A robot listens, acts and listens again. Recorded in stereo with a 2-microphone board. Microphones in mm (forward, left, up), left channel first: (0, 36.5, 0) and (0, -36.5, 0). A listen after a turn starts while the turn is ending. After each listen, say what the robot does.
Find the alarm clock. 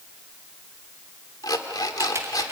Turn 60° left.
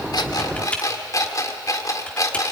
Turn 55° left.
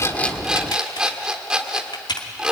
Turn 15° right.
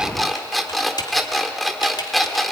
Found it: an alarm clock, straight ahead.